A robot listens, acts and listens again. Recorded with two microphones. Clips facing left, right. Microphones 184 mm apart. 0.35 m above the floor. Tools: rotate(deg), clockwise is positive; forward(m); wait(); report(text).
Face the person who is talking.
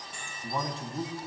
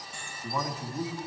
rotate(-25)
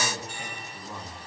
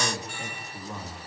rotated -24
report("Found it: a man speaking, straight ahead.")